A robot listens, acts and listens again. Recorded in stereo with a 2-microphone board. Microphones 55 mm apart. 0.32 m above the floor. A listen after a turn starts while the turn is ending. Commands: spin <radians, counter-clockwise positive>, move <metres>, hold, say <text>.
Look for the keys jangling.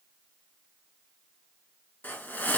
hold
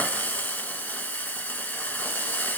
hold
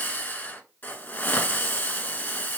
say I can't make out keys jangling to turn to.